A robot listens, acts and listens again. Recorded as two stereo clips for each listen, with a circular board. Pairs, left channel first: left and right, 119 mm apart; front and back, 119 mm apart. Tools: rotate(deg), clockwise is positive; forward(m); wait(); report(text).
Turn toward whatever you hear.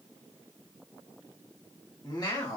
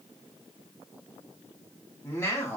rotate(-60)
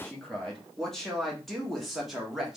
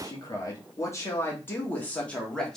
rotate(45)
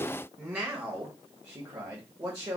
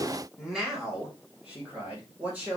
rotate(115)
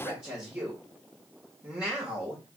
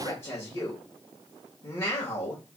rotate(15)
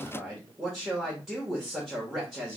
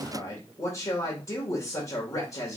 report("Found it: a man speaking, straight ahead, 1 to 2 m away.")